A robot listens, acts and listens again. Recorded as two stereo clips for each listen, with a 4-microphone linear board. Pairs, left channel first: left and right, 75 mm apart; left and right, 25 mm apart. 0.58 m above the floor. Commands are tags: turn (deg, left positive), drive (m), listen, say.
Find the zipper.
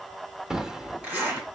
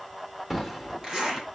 <turn deg="-20"/>
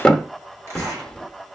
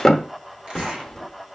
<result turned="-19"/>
<listen/>
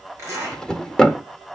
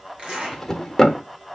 <turn deg="-145"/>
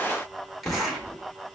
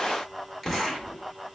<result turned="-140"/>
<say>Facing the zipper, over 4 m away.</say>